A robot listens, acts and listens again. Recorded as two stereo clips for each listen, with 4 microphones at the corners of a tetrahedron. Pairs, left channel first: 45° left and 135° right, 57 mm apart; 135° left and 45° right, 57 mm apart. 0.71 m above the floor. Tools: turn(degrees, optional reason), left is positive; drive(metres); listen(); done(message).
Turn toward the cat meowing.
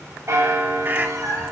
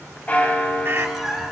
turn(degrees=-130, reason="The cat meowing: 130° right.")
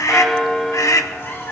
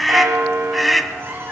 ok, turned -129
done("Found it: a cat meowing, straight ahead, 2 to 4 m away.")